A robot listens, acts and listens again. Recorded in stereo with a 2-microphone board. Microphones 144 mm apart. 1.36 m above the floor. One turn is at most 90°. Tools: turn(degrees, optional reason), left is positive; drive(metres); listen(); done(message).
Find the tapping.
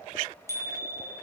listen()
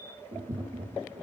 turn(degrees=-35, reason="The tapping: about 35° right or 145° right.")
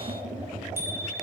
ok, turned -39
turn(degrees=-90, reason="So it is at 110° right.")
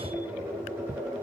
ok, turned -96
turn(degrees=-15, reason="The tapping is now 15° right.")
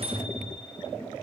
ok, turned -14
done("Found it: tapping, straight ahead, over 4 m away.")